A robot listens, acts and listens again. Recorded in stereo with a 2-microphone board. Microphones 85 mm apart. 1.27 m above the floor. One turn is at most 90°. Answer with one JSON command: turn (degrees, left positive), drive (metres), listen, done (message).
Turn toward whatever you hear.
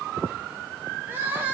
{"turn": -20}
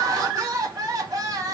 {"turn": -90}
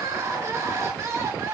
{"turn": -35}
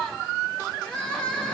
{"turn": 15}
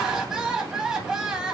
{"done": "Facing the crying."}